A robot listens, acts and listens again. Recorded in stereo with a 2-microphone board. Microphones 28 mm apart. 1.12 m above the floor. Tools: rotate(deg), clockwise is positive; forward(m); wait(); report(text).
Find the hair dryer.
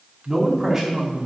wait()
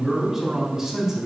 wait()
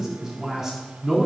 report("I can't make out a hair dryer to turn to.")